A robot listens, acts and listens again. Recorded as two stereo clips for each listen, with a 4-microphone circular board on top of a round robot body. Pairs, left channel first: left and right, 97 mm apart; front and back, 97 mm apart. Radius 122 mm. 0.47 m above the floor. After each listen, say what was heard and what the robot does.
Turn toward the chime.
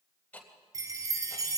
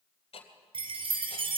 The chime: 145° right. Turn 145° right.
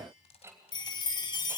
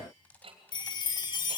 The chime is now 45° left. Turn 45° left.
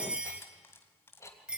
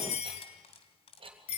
The chime is now 10° right. Turn 10° right.
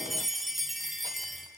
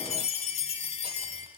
Found it: a chime, straight ahead, 2 to 4 m away.